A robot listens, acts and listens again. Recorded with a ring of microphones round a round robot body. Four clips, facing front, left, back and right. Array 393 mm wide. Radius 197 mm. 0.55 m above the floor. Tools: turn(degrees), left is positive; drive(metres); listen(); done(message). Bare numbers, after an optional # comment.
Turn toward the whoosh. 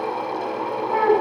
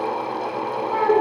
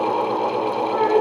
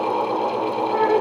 listen()
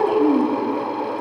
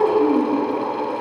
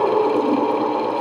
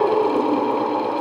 listen()
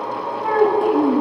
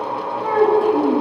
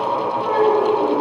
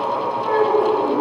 done("I can't make out a whoosh to turn to.")